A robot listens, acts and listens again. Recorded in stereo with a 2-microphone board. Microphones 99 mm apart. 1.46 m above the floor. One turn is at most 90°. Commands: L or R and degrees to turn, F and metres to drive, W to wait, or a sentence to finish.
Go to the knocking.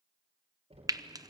R90
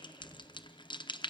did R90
W
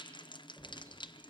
L10
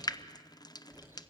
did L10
F1.0
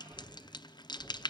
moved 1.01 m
F1.0
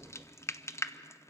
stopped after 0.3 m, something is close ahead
L10
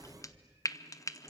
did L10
Something is in my way. I am facing the knocking but have not reached it.